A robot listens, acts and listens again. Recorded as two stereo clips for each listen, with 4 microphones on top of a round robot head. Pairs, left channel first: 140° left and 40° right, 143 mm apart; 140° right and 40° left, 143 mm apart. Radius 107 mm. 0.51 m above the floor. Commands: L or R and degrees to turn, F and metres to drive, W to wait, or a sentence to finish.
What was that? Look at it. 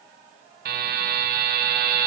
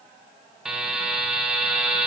R45
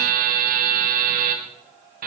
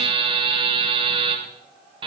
R15
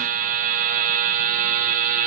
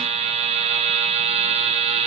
R10
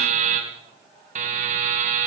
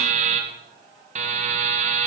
Found it: a buzzer, straight ahead, 2 to 4 m away.